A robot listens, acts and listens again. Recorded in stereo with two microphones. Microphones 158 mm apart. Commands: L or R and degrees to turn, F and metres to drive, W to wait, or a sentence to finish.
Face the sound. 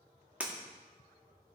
R30
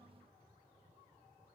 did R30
W
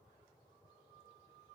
I heard breaking glass, but can't make it out now. It was about 20° left or 140° right.